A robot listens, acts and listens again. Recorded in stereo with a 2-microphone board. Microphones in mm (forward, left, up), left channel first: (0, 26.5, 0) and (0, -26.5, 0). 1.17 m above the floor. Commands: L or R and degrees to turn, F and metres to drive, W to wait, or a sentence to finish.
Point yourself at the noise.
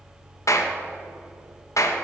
L90
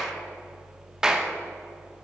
R10
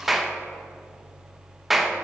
Facing the clap.